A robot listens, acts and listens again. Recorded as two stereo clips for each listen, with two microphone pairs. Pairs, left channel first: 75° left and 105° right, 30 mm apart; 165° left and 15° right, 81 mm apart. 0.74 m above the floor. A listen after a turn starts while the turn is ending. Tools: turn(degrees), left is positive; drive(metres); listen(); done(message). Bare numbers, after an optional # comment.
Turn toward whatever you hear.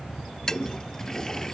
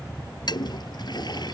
# The toilet flushing: 145° left.
turn(145)
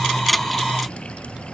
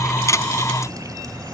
listen()
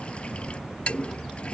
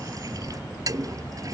# The toilet flushing is now 25° left.
turn(25)
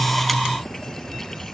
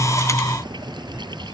listen()
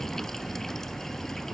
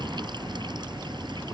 listen()
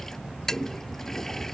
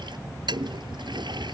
done("Found it: a toilet flushing, straight ahead.")